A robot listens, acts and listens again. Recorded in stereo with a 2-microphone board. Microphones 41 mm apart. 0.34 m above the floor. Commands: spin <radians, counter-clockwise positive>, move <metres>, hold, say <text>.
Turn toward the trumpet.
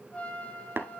spin 0.44
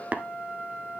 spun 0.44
spin 2.27
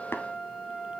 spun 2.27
spin 0.26
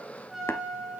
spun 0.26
say Facing the trumpet, over 4 m away.